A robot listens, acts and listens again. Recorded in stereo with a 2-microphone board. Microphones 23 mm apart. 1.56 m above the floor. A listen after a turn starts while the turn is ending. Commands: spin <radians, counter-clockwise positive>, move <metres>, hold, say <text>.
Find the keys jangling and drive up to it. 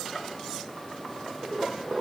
hold
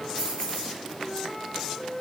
spin 1.31
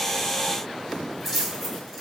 move 1.0
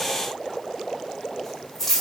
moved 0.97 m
spin 0.26
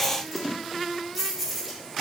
move 1.0
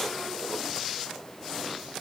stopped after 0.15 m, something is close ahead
hold
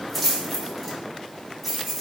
say Arrived at the keys jangling, straight ahead.